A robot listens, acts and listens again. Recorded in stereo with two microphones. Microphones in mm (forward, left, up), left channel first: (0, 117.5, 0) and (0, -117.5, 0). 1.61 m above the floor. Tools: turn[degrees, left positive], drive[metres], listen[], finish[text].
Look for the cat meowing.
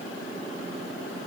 Action: listen[]
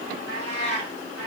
Thought: The cat meowing: about 75° left or 105° left.
Action: turn[75]
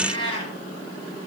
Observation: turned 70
Thought: So it is at 25° left.
Action: turn[25]
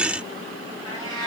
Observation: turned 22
Thought: The cat meowing is now 20° left.
Action: turn[20]
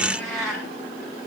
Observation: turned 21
Action: finish[Found it: a cat meowing, straight ahead, 2 to 4 m away.]